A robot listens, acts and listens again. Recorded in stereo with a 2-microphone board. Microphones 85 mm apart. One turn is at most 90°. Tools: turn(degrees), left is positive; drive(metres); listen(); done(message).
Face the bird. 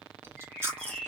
turn(degrees=30)
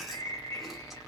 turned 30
turn(degrees=90)
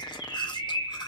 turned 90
turn(degrees=55)
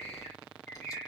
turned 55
turn(degrees=15)
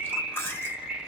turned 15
done("Facing the bird.")